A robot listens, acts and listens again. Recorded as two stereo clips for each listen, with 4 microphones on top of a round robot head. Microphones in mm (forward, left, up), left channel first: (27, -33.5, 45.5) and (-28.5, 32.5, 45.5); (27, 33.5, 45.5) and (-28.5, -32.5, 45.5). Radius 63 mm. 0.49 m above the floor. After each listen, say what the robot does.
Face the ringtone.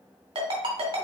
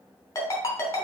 Turn 105° left.
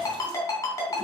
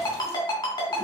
Found it: a ringtone, straight ahead, 2 to 4 m away.